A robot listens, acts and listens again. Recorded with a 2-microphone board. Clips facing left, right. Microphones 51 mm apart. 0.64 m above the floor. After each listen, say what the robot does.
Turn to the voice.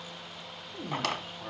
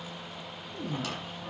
Turn 25° left.
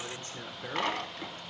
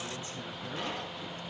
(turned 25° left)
Turn 125° left.
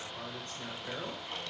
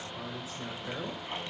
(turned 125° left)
Turn 10° right.
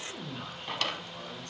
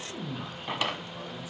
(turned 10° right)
Found it: a man speaking, straight ahead, 2 to 4 m away.